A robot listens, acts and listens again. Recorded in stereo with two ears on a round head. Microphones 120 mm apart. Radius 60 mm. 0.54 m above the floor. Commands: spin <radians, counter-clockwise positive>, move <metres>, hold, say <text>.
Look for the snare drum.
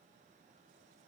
hold
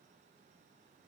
hold
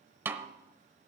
spin -0.26
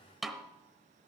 say Found it: a snare drum, straight ahead.